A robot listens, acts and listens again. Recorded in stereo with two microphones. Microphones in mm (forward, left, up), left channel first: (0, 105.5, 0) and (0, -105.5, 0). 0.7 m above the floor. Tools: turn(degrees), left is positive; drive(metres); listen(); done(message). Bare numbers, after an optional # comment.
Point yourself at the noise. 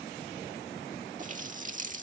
# The running tap: about 40° right or 140° right.
turn(-40)
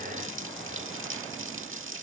# So it is at 100° right.
turn(-100)
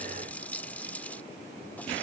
# The running tap is now 10° left.
turn(10)
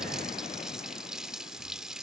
done("Facing the running tap.")